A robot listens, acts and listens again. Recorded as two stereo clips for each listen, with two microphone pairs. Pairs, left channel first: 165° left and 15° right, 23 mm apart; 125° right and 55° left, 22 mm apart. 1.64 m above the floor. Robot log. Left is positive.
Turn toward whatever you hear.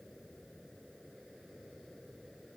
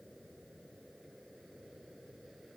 cmd idle
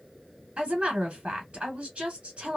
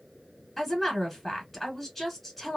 note: The woman speaking: 40° right.
cmd yaw -40
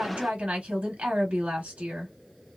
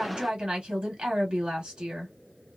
note: The woman speaking is now 10° left.
cmd yaw +10
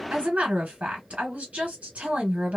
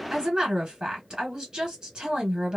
end: Found it: a woman speaking, straight ahead, 1 to 2 m away.